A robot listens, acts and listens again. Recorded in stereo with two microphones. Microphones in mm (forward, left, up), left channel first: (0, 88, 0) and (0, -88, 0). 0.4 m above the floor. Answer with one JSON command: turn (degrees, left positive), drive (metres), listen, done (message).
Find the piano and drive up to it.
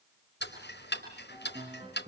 {"turn": -30}
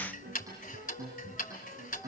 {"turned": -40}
{"turn": -110}
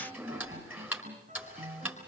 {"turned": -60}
{"turn": -50}
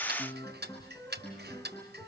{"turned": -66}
{"turn": 15}
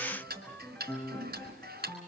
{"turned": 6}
{"turn": 10}
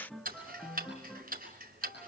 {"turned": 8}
{"drive": 1.0}
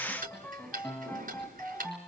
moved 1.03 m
{"turn": 10}
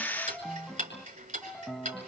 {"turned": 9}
{"drive": 1.0}
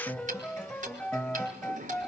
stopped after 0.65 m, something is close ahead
{"turn": 10}
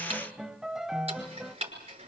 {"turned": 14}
{"done": "I am next to the piano."}